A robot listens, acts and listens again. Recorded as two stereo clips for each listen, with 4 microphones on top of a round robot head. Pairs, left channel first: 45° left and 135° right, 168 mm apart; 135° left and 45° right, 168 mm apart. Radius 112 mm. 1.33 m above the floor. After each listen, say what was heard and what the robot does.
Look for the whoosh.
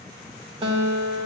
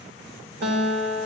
Keep listening.
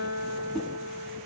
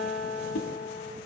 The whoosh: 135° left. Turn 135° left.
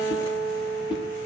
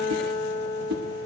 The whoosh is now 15° right. Turn 15° right.
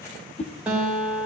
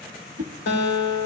Found it: a whoosh, straight ahead.